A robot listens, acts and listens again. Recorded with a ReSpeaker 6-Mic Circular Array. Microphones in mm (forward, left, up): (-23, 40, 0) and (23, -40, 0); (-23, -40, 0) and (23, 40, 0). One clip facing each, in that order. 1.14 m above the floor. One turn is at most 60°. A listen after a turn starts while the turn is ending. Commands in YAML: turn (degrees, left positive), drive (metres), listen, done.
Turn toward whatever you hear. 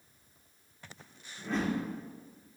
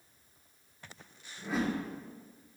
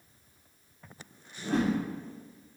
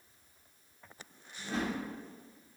turn: -60
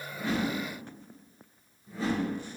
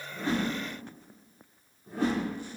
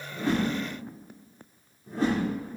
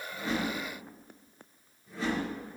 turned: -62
turn: -60
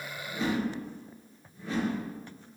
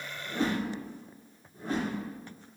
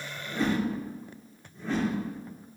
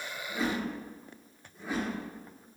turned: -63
turn: -20
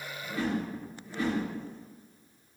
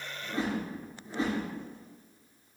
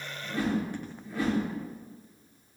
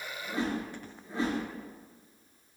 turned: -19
done: "Found it: a whoosh, straight ahead."